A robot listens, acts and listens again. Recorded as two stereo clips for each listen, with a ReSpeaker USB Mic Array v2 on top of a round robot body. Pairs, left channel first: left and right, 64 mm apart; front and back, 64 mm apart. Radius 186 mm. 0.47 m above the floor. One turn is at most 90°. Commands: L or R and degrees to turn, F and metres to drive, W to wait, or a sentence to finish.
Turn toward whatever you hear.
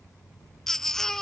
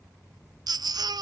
L90
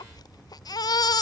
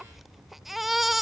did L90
L90
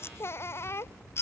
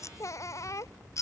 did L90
L40
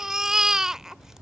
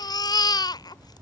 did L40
R10
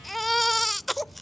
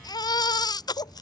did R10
Found it: a baby crying, straight ahead.